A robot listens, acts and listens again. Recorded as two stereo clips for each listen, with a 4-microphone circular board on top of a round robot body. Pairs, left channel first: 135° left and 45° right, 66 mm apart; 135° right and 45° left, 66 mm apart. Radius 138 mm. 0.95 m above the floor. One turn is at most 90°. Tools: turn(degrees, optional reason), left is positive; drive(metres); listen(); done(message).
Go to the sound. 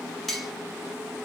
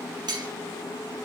turn(degrees=50, reason="The cutlery clinking: 50° left.")
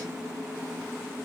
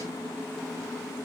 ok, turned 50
listen()
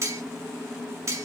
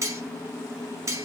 drive(metres=1.0)
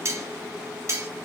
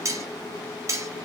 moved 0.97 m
drive(metres=1.0)
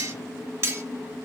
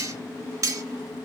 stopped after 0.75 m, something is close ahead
done("Arrived at the cutlery clinking, straight ahead.")